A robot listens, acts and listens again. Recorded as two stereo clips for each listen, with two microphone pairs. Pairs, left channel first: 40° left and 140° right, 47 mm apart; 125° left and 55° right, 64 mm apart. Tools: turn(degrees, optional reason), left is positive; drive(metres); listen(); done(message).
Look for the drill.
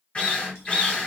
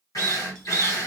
turn(degrees=105, reason="The drill: 105° left.")
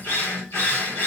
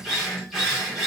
turn(degrees=35, reason="The drill is now 35° left.")
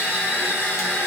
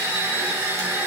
done("Facing the drill, 1 to 2 m away.")